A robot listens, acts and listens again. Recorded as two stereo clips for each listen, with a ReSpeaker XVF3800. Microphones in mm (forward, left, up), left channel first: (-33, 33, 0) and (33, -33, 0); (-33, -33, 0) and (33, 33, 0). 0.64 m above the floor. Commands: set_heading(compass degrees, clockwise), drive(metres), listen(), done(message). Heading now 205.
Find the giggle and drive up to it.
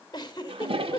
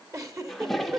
set_heading(105)
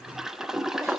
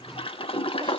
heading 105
listen()
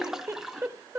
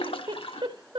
set_heading(90)
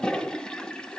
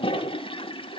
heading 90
listen()
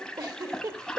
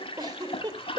drive(1.0)
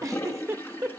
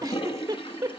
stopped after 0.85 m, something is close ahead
done("I am next to the giggle.")